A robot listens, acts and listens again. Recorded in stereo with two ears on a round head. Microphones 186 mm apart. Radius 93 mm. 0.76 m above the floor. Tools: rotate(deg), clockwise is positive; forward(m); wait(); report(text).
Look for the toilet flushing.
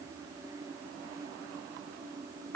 wait()
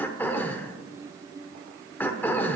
wait()
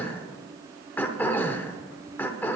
report("I can't make out a toilet flushing, only throat clearing.")